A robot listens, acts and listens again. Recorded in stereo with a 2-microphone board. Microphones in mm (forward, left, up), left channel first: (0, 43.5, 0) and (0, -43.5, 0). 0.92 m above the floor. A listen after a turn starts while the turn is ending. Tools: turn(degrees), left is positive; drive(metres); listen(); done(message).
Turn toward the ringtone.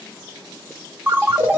turn(degrees=-20)
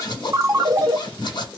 turn(degrees=-135)
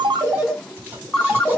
done("Facing the ringtone.")